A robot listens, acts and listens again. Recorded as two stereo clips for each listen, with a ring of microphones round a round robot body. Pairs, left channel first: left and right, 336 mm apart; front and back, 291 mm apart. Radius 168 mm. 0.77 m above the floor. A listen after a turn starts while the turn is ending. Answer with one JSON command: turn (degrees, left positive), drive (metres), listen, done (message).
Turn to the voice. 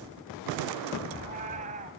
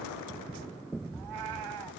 {"listen": true}
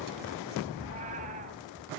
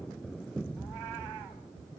{"listen": true}
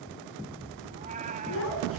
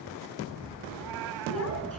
{"turn": 35}
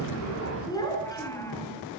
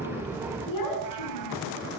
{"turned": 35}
{"turn": 10}
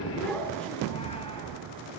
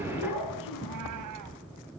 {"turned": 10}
{"done": "Facing the child speaking, over 4 m away."}